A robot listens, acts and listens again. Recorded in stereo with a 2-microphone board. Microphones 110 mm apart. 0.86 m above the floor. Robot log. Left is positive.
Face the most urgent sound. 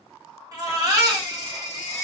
note: The baby crying: about 35° right or 145° right.
cmd yaw -35
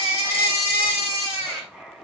note: So it is at 110° right.
cmd yaw -110
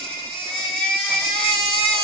note: The baby crying is now 10° left.
cmd yaw +10
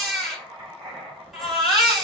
end: Found it: a baby crying, straight ahead.